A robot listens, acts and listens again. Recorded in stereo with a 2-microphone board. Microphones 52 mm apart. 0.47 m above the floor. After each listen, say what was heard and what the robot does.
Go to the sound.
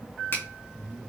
The finger snap: about 50° left or 130° left. Turn 50° left.
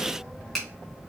Drive 1.0 m forward.
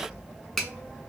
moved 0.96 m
The finger snap is now 10° left. Turn 10° left.
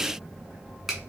Keep listening.
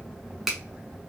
Drive 1.0 m forward.
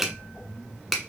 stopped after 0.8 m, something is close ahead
Arrived at the finger snap, straight ahead.